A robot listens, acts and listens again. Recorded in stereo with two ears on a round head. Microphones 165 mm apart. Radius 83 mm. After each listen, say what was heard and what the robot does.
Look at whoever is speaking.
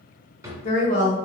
The woman speaking: about 45° left or 135° left. Turn 45° left.
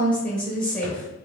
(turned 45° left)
Found it: a woman speaking, straight ahead.